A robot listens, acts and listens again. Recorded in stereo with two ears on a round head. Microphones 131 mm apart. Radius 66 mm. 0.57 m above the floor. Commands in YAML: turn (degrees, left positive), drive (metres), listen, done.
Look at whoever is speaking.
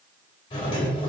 listen: true
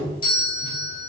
listen: true
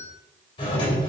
done: "I can't make out anyone speaking to turn to."